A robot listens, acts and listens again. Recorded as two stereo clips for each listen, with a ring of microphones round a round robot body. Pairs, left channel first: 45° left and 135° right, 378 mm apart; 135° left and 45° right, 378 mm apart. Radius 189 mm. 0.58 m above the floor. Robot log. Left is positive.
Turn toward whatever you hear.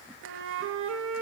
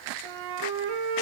note: The flute: 75° right.
cmd yaw -75
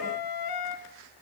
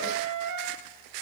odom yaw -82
end: Facing the flute.